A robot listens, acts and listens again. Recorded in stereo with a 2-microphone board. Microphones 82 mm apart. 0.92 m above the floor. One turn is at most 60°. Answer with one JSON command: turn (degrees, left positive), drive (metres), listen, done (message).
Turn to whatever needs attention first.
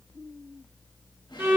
{"listen": true}
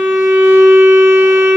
{"listen": true}
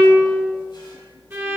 {"done": "I can't make out anything urgent to turn to."}